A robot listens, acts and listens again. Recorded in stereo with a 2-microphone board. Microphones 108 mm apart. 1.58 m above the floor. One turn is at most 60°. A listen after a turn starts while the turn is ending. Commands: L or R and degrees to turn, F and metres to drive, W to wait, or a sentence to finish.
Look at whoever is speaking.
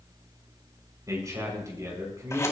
R35
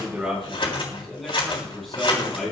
Found it: a man speaking, straight ahead, over 4 m away.